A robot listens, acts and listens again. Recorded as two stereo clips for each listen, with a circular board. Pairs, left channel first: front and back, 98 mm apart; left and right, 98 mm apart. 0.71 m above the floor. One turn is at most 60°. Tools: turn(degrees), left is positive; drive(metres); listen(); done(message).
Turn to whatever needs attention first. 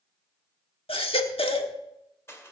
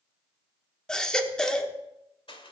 turn(degrees=10)
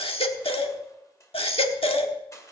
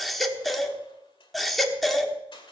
done("Found it: a baby crying, straight ahead, 1 to 2 m away.")